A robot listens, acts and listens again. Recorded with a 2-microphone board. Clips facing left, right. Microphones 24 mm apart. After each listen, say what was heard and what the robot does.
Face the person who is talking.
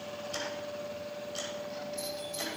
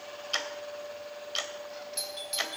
Keep listening.
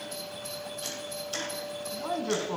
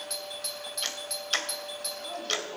The man speaking: about 60° left or 120° left. Turn 60° left.
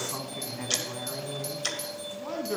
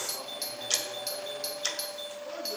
So it is at 60° left. Turn 60° left.
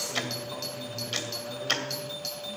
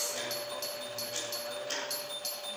Keep listening.
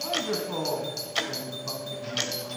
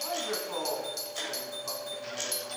Facing the man speaking.